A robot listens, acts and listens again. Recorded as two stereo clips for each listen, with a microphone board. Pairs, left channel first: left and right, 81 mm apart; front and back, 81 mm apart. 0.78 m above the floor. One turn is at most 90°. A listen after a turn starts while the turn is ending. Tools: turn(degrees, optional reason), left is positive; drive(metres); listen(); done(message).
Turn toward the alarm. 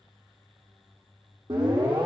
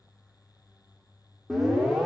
turn(degrees=-90, reason="The alarm: 95° right.")
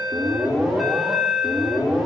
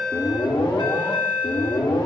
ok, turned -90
done("Found it: an alarm, straight ahead.")